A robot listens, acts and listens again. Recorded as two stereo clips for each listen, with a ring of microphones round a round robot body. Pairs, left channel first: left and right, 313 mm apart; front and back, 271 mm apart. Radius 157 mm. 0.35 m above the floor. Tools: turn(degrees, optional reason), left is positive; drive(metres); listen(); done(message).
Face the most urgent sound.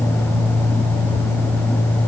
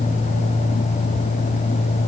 listen()
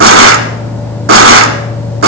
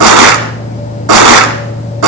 listen()
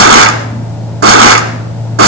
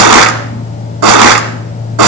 done("I can't make out anything urgent, only crushing.")